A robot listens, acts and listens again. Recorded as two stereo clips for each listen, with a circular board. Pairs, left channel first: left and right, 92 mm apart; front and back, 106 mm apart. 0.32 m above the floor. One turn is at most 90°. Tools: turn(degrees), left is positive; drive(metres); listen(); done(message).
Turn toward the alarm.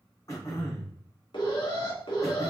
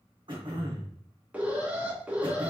turn(degrees=90)
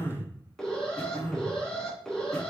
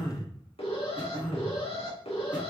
done("Found it: an alarm, straight ahead.")